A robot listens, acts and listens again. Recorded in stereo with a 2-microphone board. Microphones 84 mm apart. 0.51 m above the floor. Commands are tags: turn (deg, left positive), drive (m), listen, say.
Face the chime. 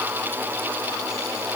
<listen/>
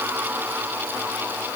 <listen/>
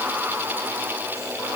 <say>I can't make out a chime.</say>